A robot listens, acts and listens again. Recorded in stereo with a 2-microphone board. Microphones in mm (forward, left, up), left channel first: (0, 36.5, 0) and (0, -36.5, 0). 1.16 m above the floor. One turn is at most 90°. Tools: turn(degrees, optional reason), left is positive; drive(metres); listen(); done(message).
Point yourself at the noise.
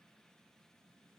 listen()
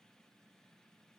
listen()
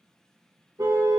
turn(degrees=-60, reason="The car horn: about 60° right or 120° right.")
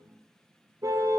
turn(degrees=-55, reason="So it is at 55° right.")
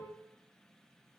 listen()
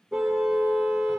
done("Facing the car horn.")